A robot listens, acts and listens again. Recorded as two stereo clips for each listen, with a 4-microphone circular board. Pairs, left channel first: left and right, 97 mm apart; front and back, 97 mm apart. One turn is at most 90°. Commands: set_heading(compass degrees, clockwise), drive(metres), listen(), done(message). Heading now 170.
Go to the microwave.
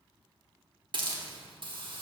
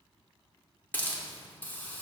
listen()
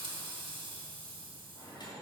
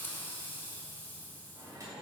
set_heading(80)
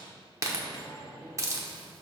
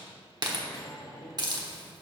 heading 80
set_heading(30)
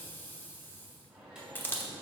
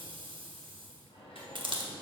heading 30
set_heading(40)
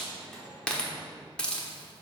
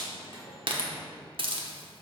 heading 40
drive(1.0)
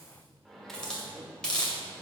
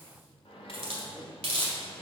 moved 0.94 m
drive(1.0)
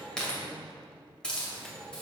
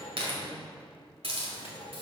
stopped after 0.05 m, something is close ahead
done("Arrived at the microwave, straight ahead.")